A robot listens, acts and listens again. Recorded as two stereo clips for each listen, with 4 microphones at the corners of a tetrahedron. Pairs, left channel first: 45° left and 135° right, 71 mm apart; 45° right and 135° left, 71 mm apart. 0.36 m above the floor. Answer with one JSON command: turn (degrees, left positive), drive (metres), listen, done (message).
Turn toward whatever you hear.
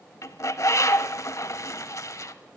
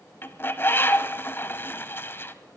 {"turn": 10}
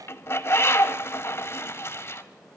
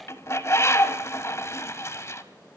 {"done": "Found it: a bird, straight ahead, 1 to 2 m away."}